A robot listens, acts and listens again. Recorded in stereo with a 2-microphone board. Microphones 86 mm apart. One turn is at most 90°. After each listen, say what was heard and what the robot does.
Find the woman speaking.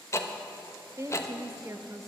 The woman speaking: about 35° right or 145° right. Turn 35° right.
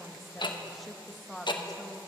Facing the woman speaking, under 1 m away.